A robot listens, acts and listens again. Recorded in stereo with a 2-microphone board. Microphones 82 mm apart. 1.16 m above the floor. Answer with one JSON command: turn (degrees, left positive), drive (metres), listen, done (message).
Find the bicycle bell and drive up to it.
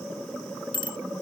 {"turn": 90}
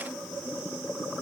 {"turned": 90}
{"listen": true}
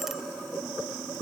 {"listen": true}
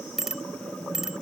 {"drive": 1.0}
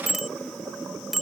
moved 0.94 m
{"drive": 1.0}
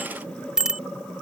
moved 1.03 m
{"turn": -10}
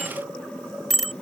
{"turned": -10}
{"drive": 1.0}
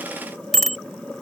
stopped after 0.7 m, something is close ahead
{"done": "I am next to the bicycle bell."}